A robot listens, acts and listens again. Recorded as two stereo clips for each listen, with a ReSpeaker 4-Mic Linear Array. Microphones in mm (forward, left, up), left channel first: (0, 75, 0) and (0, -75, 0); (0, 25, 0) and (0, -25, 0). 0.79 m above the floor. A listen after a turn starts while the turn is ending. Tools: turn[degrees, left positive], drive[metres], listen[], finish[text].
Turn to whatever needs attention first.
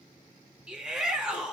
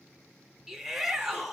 Action: turn[-30]
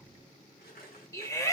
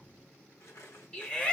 Thought: So it is at 25° left.
Action: turn[25]
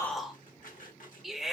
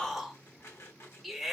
Action: finish[Found it: a shout, straight ahead.]